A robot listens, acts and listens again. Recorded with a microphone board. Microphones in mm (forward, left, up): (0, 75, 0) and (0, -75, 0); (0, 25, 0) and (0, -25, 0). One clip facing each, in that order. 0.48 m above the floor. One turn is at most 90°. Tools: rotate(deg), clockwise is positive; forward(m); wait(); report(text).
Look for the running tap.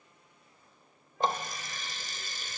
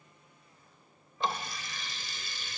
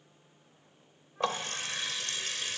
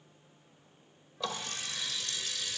rotate(-40)
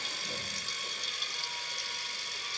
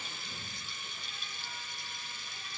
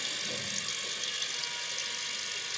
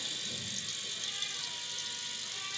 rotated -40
rotate(-90)
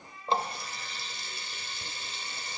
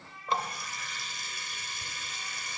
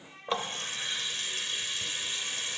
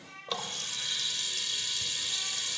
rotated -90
rotate(-30)
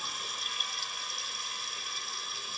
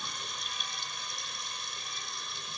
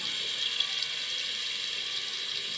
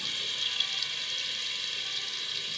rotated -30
report("Found it: a running tap, straight ahead, 1 to 2 m away.")